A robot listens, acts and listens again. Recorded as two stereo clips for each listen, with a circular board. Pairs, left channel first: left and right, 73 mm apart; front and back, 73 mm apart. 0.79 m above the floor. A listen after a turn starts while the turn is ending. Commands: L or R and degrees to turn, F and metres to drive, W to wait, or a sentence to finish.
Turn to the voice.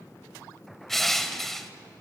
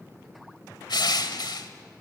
W
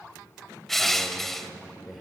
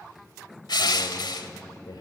Facing the man speaking, 2 to 4 m away.